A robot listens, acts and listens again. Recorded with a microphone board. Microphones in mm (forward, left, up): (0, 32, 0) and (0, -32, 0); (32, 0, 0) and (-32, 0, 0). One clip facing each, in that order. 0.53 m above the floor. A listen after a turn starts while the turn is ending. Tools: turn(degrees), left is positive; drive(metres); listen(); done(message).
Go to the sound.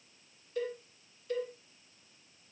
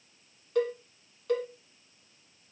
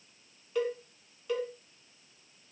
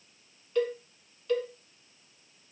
turn(degrees=-80)
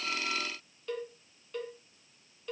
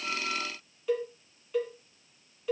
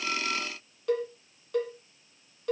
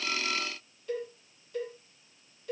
drive(metres=1.0)
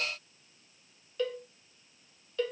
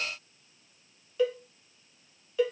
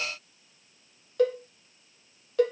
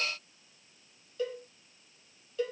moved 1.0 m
turn(degrees=-10)
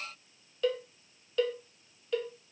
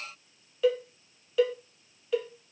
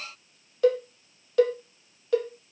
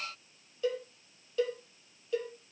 drive(metres=1.0)
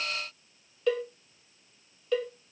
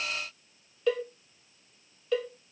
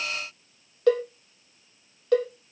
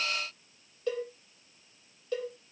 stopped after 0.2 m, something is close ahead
done("I am next to the cowbell.")